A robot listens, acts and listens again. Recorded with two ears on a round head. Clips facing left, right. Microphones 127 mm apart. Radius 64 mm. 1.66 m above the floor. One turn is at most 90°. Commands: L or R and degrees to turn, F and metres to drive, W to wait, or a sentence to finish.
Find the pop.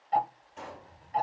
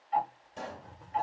R45
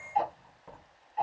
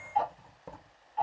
W
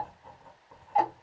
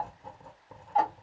I heard a pop, but can't make it out now. It was about straight ahead or 90° right.